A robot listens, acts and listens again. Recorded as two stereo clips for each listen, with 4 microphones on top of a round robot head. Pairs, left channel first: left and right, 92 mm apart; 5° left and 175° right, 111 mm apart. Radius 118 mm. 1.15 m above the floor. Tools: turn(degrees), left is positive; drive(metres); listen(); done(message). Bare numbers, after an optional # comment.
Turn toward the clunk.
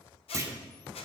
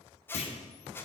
# The clunk: 35° right.
turn(-35)
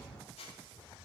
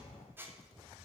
done("I heard a clunk from this way, but can't make it out now.")